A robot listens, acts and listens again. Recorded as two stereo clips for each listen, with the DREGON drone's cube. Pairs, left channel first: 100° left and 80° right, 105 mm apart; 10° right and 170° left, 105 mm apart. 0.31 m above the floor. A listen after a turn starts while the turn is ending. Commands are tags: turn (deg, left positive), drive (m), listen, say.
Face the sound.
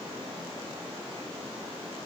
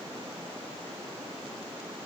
<listen/>
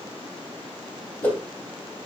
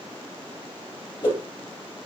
<turn deg="25"/>
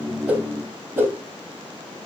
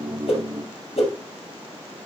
<say>Found it: a whoosh, straight ahead, 2 to 4 m away.</say>